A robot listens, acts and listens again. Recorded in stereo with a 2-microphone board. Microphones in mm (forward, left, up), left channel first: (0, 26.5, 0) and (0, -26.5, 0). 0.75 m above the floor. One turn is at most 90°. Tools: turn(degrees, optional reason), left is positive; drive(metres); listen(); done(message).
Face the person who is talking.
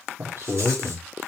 turn(degrees=-50, reason="The man speaking: about 50° right or 130° right.")
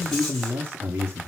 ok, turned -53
turn(degrees=-40, reason="So it is at 40° right.")
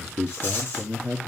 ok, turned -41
done("Facing the man speaking, 1 to 2 m away.")